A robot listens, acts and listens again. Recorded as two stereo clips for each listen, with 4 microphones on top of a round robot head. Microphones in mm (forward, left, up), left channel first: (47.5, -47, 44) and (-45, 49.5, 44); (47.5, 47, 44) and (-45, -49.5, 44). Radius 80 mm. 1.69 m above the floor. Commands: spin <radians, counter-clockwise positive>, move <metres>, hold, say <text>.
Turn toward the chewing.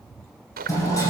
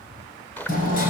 spin 2.18
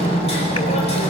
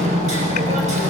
hold
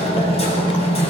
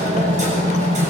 hold
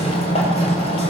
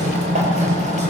say Facing where the chewing came from. I can't hear it now.